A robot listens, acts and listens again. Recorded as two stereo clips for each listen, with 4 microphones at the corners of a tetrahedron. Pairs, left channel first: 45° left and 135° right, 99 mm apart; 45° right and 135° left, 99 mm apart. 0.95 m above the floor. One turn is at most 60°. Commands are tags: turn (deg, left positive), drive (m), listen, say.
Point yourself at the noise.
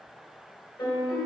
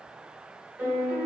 <turn deg="60"/>
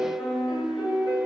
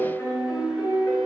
<turn deg="15"/>
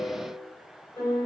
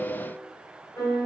<say>Facing the piano, 1 to 2 m away.</say>